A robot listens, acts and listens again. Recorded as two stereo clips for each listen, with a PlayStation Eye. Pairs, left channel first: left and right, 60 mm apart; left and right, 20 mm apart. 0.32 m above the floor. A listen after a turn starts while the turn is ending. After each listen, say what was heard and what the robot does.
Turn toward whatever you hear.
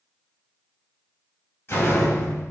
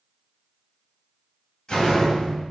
The door slam: about 45° left or 135° left. Turn 45° left.
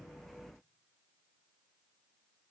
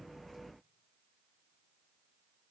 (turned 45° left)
Keep listening.
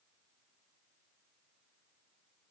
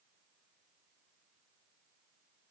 I heard a door slam, but can't make it out now. It was about straight ahead or 90° left.